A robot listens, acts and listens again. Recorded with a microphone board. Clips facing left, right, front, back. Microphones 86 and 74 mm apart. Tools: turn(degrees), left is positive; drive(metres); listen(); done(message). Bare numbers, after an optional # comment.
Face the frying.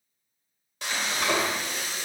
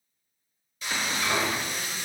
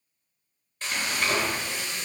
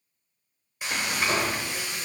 # The frying: 105° left.
turn(105)
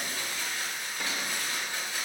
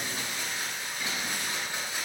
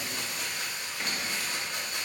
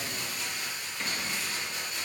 # The frying is now 20° right.
turn(-20)
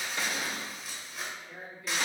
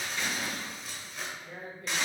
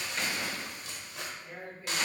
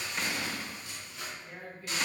done("Found it: frying, straight ahead, under 1 m away.")